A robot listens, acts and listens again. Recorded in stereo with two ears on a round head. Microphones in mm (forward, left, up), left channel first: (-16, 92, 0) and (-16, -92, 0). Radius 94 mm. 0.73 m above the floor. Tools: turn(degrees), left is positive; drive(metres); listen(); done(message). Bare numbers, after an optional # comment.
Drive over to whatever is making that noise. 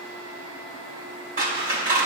# The scissors: about 45° right or 135° right.
turn(-45)
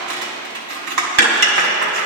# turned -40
# So it is at 95° right.
turn(-95)
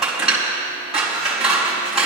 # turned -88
drive(1.0)
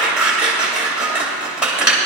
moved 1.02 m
drive(1.0)
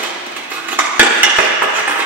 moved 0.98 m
# The scissors is now 10° right.
turn(-10)
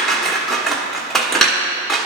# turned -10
drive(1.0)
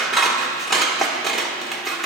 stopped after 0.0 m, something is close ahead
done("Arrived at the scissors, straight ahead.")